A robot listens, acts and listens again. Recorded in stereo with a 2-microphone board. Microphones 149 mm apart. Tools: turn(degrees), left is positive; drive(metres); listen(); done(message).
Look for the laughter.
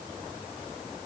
listen()
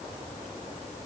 listen()
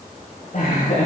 turn(degrees=65)
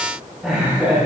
turn(degrees=-10)
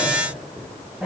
done("Found it: laughter, straight ahead.")